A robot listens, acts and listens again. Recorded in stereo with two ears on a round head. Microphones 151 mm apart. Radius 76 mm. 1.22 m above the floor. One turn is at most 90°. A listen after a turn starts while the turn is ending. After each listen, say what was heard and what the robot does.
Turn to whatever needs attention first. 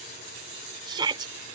The shout: about 25° right or 155° right. Turn 25° right.
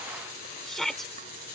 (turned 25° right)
Facing the shout.